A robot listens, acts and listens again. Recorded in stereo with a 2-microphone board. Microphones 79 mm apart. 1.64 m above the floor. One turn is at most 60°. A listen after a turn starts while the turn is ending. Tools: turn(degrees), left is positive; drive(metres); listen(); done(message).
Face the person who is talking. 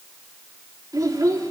turn(degrees=-50)
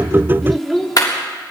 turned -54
done("Found it: a child speaking, straight ahead.")